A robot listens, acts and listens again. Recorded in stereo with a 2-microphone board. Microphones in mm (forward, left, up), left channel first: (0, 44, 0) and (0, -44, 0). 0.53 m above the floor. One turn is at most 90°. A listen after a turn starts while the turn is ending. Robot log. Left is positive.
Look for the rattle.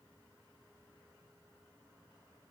cmd idle
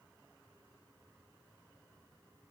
cmd idle
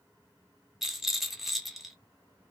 cmd yaw +30
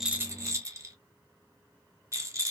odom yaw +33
note: So it is at 35° right.
cmd yaw -35
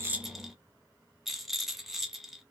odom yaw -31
end: Found it: a rattle, straight ahead, under 1 m away.